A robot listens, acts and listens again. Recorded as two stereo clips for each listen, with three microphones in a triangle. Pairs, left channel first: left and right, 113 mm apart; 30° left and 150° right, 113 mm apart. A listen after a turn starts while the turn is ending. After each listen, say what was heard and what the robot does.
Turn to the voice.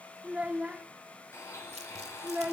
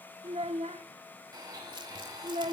The child speaking: 170° right. Turn 170° right.
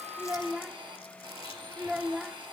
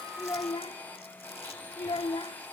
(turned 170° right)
Found it: a child speaking, straight ahead, 1 to 2 m away.